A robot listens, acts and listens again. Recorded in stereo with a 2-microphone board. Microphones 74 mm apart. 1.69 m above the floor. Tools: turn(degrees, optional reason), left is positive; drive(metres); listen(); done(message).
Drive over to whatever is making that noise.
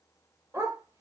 turn(degrees=-45, reason="The dog barking: about 45° right or 135° right.")
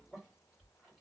listen()
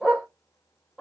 turn(degrees=-10, reason="So it is at 10° right.")
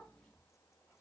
listen()
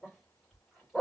drive(metres=1.0)
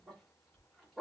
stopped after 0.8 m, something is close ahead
done("Arrived at the dog barking, straight ahead.")